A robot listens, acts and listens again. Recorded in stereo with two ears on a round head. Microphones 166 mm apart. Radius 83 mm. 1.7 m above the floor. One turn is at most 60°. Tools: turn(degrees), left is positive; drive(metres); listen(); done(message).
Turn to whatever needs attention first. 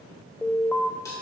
turn(degrees=30)
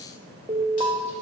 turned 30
turn(degrees=-20)
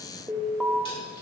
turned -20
done("Found it: an alarm, straight ahead, under 1 m away.")